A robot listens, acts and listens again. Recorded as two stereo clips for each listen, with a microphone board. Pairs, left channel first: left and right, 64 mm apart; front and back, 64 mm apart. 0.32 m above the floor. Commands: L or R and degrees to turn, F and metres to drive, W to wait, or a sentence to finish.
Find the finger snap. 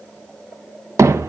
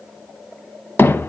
W
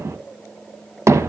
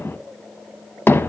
W
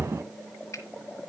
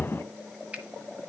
L115
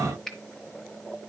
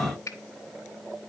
Facing the finger snap.